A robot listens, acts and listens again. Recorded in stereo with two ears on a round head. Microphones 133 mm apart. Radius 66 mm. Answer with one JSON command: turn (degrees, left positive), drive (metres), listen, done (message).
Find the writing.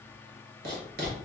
{"turn": -70}
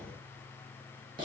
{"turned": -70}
{"turn": -30}
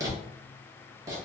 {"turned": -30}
{"turn": -25}
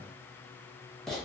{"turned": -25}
{"done": "Facing the writing, under 1 m away."}